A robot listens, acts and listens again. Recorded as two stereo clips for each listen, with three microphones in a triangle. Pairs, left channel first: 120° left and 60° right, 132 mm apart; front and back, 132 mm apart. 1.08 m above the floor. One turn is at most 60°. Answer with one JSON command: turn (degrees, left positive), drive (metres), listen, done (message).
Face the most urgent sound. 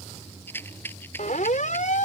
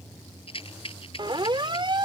{"turn": 60}
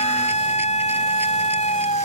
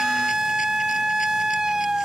{"turn": 60}
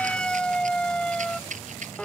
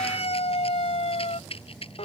{"turn": 40}
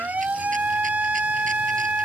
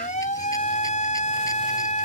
{"turn": 20}
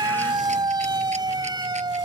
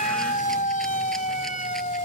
{"done": "Found it: a siren, straight ahead."}